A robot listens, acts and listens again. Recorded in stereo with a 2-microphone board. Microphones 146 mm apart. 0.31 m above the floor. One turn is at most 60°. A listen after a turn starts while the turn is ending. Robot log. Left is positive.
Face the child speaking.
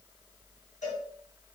cmd idle
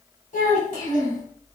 note: The child speaking: about 60° left or 120° left.
cmd yaw +60
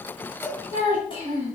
note: So it is at 40° left.
cmd yaw +40
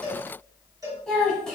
end: Found it: a child speaking, straight ahead.